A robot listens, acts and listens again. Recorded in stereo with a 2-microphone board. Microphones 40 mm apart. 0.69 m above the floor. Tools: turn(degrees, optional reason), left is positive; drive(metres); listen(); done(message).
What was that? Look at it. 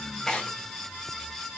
turn(degrees=15, reason="The tearing paper: about 15° left or 165° left.")
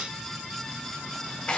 turn(degrees=150, reason="So it is at 150° left.")
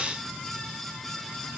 listen()
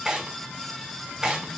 turn(degrees=-20, reason="The tearing paper is now 20° right.")
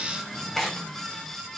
done("Found it: tearing paper, straight ahead.")